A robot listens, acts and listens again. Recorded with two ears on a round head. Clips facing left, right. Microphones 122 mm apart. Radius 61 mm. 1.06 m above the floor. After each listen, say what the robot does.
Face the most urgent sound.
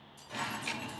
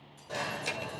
Turn 55° right.
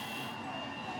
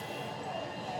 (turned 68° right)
Turn 60° right.
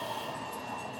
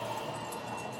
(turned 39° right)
Turn 20° right.
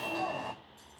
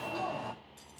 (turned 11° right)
Found it: an alarm, straight ahead, over 4 m away.